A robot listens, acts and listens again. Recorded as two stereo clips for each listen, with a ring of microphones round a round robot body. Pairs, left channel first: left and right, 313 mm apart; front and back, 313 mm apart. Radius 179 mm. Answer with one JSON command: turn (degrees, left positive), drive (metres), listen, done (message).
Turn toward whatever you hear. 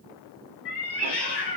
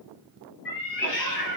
{"turn": 60}
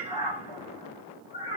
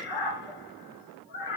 {"turn": 20}
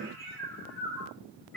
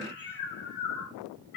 {"done": "Found it: a cat meowing, straight ahead."}